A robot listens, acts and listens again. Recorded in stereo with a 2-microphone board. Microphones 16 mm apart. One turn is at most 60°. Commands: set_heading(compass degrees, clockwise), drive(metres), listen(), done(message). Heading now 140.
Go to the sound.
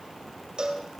set_heading(195)
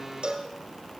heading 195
set_heading(255)
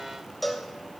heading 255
drive(1.0)
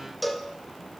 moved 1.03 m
drive(1.0)
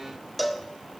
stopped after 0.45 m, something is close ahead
done("I am next to the cowbell.")